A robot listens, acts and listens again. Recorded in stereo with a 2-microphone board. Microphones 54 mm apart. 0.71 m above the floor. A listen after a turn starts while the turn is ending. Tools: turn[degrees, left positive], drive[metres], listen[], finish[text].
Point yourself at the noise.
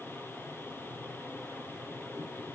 Action: listen[]
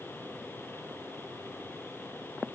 Action: listen[]
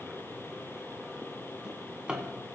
Thought: The drawer: about 15° right or 165° right.
Action: turn[-15]
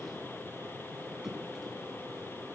Action: listen[]
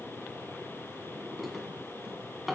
Action: finish[Found it: a drawer, straight ahead.]